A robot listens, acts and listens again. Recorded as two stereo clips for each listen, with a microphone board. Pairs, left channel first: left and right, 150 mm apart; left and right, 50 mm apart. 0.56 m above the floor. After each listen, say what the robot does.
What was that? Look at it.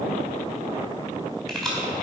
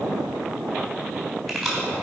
Turn 30° left.
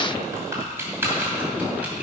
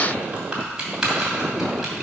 Turn 15° right.
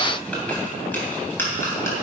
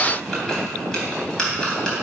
Turn 20° left.
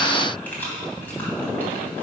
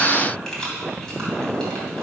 Turn 10° left.
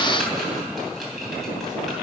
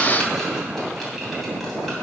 Keep listening.
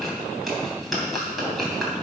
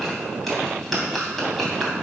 Found it: keys jangling, straight ahead.